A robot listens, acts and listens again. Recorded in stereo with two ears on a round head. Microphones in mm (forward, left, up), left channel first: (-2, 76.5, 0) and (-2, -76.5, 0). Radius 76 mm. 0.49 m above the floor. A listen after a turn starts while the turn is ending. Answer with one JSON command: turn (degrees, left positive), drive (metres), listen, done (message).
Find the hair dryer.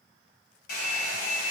{"turn": 65}
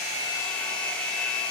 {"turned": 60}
{"turn": 10}
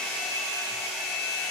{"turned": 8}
{"done": "Found it: a hair dryer, straight ahead."}